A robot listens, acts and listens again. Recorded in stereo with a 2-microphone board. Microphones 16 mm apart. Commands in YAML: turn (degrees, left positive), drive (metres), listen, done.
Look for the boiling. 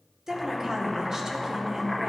turn: -30
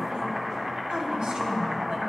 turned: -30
turn: -145
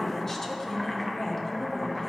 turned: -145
done: "Facing the boiling."